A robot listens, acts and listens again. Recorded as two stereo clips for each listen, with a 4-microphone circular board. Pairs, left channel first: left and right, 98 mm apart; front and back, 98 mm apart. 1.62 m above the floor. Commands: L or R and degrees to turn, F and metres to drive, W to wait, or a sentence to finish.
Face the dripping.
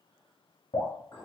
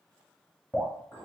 L95
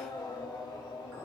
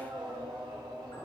W
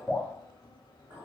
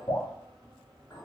R10
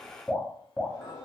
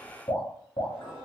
Facing the dripping, 1 to 2 m away.